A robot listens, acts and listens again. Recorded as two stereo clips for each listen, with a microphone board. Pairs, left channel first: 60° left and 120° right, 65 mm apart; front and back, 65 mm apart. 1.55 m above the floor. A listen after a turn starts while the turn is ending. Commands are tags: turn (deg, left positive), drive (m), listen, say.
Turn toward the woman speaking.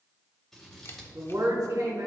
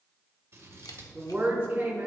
<turn deg="-125"/>
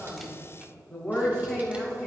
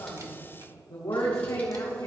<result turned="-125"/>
<turn deg="-20"/>
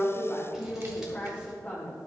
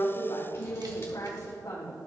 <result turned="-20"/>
<say>Found it: a woman speaking, straight ahead.</say>